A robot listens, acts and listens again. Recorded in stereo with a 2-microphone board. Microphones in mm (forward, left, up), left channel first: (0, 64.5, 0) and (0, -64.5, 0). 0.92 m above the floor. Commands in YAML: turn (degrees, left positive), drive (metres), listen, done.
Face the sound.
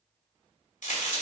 turn: 90
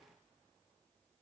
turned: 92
done: "Facing where the crack came from. I can't hear it now."